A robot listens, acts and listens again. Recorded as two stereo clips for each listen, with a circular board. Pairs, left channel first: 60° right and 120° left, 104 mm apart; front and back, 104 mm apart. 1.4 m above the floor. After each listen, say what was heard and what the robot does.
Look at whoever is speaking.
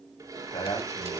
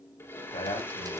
The man speaking: 15° right. Turn 15° right.
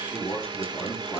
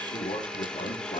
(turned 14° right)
Facing the man speaking, over 4 m away.